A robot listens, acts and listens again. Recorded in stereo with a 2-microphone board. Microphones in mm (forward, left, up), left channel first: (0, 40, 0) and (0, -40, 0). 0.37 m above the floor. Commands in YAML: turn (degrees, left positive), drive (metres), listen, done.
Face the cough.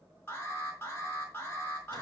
listen: true
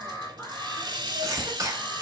turn: -40
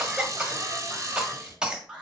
turn: -10
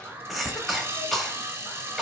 done: "Facing the cough."